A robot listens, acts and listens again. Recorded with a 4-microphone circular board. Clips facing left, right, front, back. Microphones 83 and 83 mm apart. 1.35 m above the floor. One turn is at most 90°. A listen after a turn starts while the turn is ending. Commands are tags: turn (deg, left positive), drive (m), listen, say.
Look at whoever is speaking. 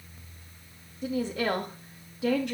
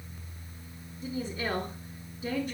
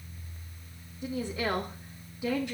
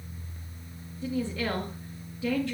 <turn deg="70"/>
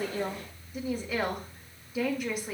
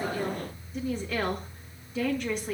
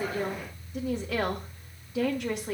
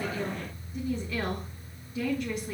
<turn deg="10"/>
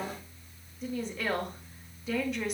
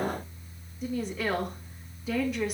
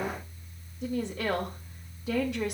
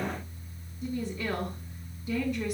<say>Facing the woman speaking, 2 to 4 m away.</say>